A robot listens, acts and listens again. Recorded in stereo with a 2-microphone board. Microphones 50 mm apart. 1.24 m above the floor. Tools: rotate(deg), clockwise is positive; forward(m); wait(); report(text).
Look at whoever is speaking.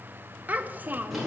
rotate(35)
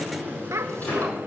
rotate(110)
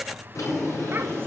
wait()
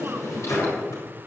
wait()
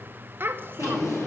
rotate(45)
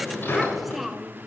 report("Found it: a child speaking, straight ahead, under 1 m away.")